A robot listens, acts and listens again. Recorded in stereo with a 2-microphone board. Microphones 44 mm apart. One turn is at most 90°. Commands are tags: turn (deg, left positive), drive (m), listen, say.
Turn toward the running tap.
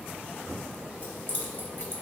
<listen/>
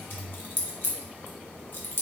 <listen/>
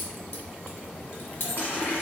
<turn deg="45"/>
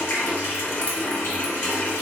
<turn deg="85"/>
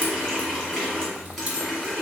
<turn deg="10"/>
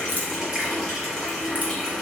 <say>Facing the running tap, 1 to 2 m away.</say>